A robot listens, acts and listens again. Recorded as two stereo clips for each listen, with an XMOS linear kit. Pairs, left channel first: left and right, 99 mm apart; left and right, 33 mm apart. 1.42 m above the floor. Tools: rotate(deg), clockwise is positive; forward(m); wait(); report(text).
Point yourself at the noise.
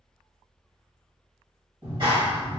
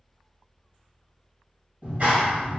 rotate(55)
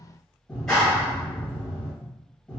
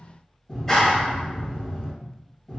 report("Found it: a clap, straight ahead.")